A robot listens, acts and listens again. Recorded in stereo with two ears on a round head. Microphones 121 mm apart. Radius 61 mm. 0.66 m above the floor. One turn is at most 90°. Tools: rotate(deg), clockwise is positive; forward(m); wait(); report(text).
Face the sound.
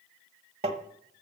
rotate(45)
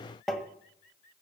report("Facing the tapping.")